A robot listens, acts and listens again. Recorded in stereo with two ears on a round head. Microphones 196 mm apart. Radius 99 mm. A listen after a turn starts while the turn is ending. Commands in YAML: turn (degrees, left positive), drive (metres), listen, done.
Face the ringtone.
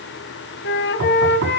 listen: true
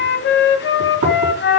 listen: true
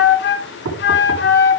done: "I can't make out a ringtone, only a flute and knocking."